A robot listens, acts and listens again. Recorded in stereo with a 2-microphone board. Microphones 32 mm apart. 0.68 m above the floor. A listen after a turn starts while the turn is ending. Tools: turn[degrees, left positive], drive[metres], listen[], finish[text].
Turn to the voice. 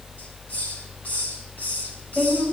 Thought: The woman speaking: about 30° left or 150° left.
Action: turn[30]
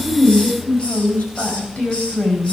Thought: So it is at 120° left.
Action: turn[120]
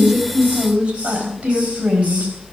Thought: The woman speaking is now 50° right.
Action: turn[-50]
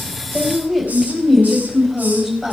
Thought: The woman speaking is now 15° right.
Action: turn[-15]
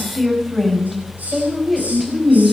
Action: finish[Found it: a woman speaking, straight ahead, over 4 m away.]